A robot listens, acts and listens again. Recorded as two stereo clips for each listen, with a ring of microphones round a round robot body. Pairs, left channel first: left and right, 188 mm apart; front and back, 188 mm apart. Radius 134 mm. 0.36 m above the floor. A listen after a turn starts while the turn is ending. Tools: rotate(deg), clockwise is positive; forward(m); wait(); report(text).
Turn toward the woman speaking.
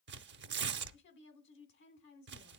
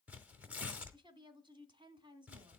rotate(-115)
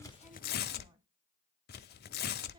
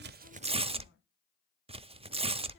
wait()
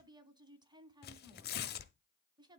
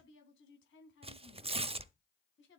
rotate(25)
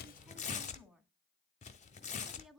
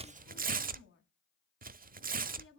report("Facing the woman speaking, 2 to 4 m away.")